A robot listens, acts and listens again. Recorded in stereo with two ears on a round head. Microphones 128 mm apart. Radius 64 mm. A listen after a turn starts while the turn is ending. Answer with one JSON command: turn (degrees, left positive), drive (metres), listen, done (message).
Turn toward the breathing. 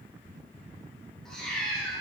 {"listen": true}
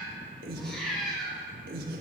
{"turn": -70}
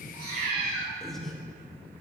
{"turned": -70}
{"done": "Facing the breathing, under 1 m away."}